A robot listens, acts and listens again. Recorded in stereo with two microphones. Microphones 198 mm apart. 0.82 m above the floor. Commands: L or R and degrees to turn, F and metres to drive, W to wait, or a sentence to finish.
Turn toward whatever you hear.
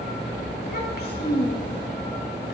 L60
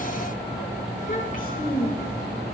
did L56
L50
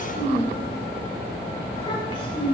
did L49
L25
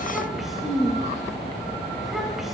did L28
Facing the child speaking, 2 to 4 m away.